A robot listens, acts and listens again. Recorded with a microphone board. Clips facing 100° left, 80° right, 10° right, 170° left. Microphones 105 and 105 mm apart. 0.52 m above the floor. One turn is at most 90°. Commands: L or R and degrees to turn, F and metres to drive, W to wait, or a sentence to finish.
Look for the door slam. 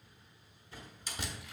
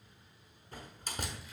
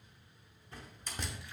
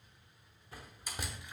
R90
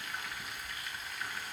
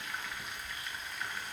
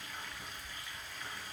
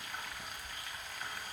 R20
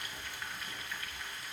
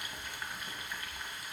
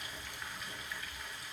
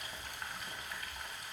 I heard a door slam from this way, but can't make it out now.